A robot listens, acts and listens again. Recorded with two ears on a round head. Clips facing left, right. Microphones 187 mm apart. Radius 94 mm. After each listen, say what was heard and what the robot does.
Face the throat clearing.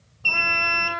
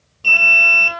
Keep listening.
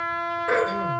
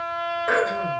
The throat clearing: about 65° right or 115° right. Turn 65° right.
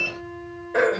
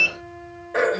Found it: throat clearing, straight ahead, 2 to 4 m away.